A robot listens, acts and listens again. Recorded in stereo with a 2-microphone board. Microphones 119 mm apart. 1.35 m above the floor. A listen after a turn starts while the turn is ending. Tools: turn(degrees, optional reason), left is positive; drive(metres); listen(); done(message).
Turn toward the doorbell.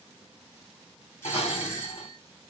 turn(degrees=20, reason="The doorbell: about 20° left or 160° left.")
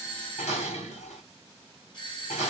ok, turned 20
turn(degrees=135, reason="So it is at 135° left.")
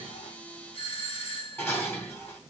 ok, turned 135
turn(degrees=55, reason="The doorbell is now 55° left.")
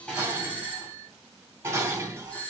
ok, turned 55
turn(degrees=15, reason="The doorbell is now 15° left.")
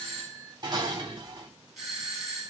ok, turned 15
done("Found it: a doorbell, straight ahead, 2 to 4 m away.")